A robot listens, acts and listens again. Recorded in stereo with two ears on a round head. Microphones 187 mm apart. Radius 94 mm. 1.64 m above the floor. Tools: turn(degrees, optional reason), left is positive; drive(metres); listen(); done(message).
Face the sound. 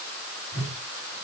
turn(degrees=-65, reason="The whoosh: about 65° right or 115° right.")
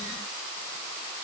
listen()
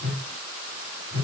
turn(degrees=-50, reason="So it is at 50° right.")
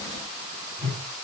turn(degrees=-15, reason="The whoosh is now 15° right.")
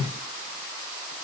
done("Found it: a whoosh, straight ahead, 2 to 4 m away.")